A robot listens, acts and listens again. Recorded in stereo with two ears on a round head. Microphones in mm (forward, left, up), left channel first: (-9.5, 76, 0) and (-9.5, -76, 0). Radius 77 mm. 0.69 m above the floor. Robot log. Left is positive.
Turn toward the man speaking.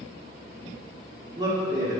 note: The man speaking: about 25° right or 155° right.
cmd yaw -25
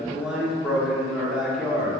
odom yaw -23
end: Facing the man speaking.